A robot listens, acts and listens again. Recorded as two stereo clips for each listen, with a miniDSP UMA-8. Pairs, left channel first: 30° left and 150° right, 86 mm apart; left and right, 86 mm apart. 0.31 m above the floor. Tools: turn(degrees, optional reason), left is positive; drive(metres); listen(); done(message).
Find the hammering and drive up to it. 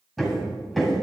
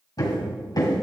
turn(degrees=120, reason="The hammering: 120° left.")
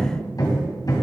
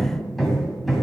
drive(metres=1.0)
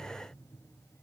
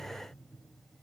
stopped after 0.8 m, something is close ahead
listen()
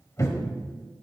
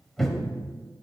done("Arrived at the hammering, straight ahead.")